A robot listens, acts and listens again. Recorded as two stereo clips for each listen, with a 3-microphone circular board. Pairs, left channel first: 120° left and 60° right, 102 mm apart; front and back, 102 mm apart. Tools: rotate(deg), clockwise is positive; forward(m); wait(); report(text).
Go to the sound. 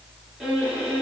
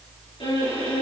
rotate(-25)
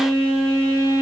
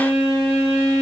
forward(1.0)
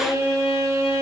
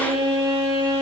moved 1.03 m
forward(1.0)
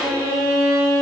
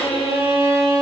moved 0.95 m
forward(1.0)
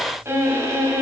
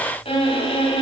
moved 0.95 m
forward(1.0)
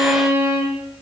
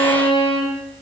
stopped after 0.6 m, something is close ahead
report("I am next to the violin.")